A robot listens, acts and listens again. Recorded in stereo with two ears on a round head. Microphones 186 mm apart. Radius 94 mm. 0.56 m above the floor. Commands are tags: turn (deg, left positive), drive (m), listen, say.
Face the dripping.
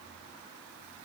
<listen/>
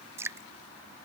<turn deg="-30"/>
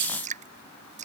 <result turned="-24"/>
<turn deg="-145"/>
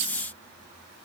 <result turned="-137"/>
<listen/>
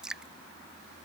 <say>Found it: dripping, straight ahead.</say>